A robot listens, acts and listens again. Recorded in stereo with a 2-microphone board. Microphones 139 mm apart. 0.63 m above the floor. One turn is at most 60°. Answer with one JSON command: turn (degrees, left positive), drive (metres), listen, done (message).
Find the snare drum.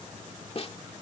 {"turn": 45}
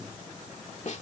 {"turn": 60}
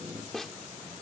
{"done": "Facing the snare drum."}